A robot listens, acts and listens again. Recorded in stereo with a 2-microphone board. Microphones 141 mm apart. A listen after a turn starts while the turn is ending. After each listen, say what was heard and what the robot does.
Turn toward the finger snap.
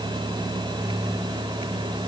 Keep listening.
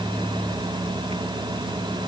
Keep listening.
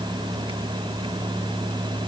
I can't make out a finger snap to turn to.